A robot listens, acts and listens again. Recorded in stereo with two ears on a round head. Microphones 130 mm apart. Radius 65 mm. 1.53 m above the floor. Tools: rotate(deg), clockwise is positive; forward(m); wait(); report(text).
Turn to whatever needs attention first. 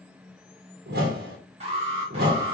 rotate(45)
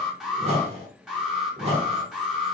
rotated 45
report("Facing the alarm, 1 to 2 m away.")